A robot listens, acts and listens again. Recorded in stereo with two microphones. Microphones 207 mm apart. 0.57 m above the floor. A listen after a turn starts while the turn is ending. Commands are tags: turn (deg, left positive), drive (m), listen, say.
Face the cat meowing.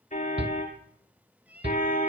<turn deg="-30"/>
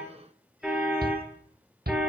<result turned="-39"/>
<listen/>
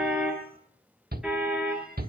<listen/>
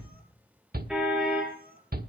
<turn deg="-135"/>
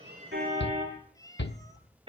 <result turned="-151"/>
<turn deg="15"/>
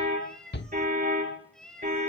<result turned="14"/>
<say>Facing the cat meowing.</say>